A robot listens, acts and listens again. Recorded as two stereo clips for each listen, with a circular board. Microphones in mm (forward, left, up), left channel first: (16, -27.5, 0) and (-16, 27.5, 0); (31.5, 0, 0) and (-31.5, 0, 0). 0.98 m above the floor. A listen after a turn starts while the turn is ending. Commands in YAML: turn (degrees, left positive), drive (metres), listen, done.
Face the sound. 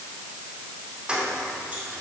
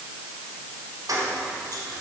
turn: -165
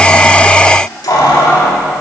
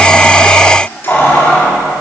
turn: -70
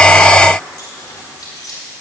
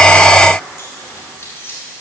turn: -50
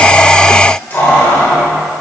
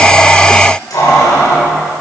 done: "Found it: keys jangling, straight ahead, 2 to 4 m away."